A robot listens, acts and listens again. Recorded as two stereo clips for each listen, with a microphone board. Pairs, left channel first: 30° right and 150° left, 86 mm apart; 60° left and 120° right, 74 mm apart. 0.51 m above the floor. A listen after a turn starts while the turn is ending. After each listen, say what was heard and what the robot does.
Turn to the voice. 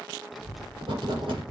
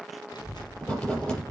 The child speaking: 60° left. Turn 60° left.
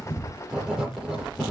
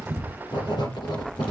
The child speaking is now 10° right. Turn 10° right.
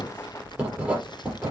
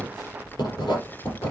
Found it: a child speaking, straight ahead.